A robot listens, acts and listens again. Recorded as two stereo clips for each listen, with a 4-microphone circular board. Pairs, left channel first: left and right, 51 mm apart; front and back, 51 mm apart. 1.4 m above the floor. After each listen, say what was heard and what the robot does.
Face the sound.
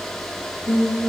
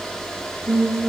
The singing: 95° left. Turn 95° left.
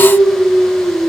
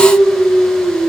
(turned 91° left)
The singing is now 20° left. Turn 20° left.
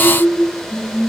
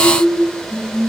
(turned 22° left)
The singing is now 10° left. Turn 10° left.
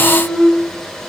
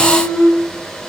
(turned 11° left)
Facing the singing, 1 to 2 m away.